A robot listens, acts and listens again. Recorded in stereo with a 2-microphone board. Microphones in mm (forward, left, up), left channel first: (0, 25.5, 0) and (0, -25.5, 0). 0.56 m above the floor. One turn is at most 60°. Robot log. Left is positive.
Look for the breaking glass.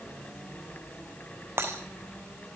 note: The breaking glass: about 55° right or 125° right.
cmd yaw -55
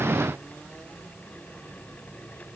cmd idle
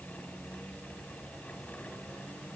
end: I heard breaking glass, but can't make it out now. It was about straight ahead or 70° right.